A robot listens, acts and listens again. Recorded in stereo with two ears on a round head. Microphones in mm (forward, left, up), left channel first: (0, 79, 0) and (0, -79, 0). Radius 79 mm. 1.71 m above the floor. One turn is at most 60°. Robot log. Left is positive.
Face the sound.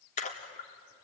note: The splash: about 40° left or 140° left.
cmd yaw +40
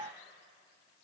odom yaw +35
cmd idle
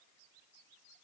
end: I heard a splash, but can't make it out now. It was about 5° left or 105° left.